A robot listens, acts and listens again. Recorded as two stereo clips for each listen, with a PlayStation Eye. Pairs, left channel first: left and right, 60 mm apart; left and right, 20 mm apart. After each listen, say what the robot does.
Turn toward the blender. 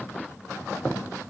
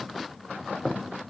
Keep listening.
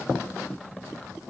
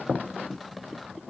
Keep listening.
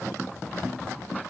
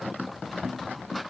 I can't make out a blender.